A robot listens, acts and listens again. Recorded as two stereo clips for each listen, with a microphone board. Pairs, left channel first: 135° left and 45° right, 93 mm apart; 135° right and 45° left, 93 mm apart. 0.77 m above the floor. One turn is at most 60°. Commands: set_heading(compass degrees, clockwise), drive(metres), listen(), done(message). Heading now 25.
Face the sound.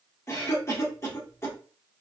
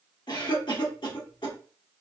set_heading(85)
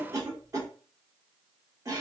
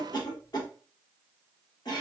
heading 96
set_heading(156)
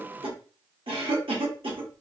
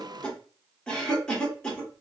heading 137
set_heading(192)
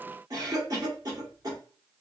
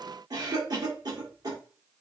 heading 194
done("Found it: a cough, straight ahead, 1 to 2 m away.")